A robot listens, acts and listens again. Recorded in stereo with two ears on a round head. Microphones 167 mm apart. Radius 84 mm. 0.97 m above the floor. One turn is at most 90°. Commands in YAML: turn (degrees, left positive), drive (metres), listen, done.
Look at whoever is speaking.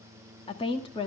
turn: 25
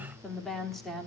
done: "Facing the woman speaking."